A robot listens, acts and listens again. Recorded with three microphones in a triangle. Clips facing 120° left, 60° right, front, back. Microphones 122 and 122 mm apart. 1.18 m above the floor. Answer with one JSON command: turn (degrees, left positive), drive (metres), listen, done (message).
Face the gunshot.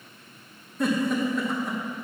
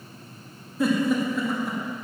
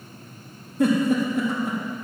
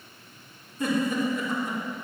{"listen": true}
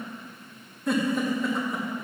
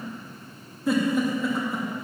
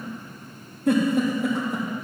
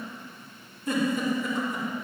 {"listen": true}
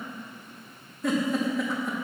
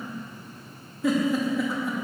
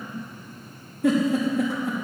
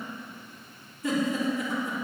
{"done": "I can't make out a gunshot to turn to."}